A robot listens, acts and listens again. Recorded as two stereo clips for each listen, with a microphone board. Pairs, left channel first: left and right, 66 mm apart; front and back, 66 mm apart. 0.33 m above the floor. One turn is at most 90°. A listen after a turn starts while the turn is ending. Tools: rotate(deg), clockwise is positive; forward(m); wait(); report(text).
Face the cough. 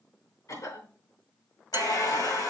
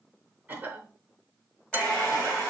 rotate(-90)
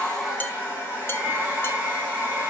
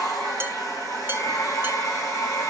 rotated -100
rotate(-15)
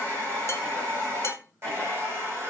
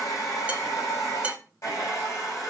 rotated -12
wait()
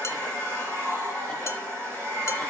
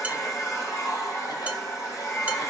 report("Facing where the cough came from. I can't hear it now.")